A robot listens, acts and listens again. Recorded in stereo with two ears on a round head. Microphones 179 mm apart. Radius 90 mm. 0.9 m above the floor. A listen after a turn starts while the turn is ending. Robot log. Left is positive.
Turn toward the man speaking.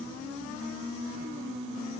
cmd idle
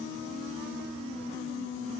cmd idle
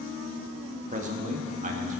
note: The man speaking: about 40° right or 140° right.
cmd yaw -40
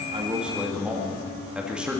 end: Found it: a man speaking, straight ahead, 1 to 2 m away.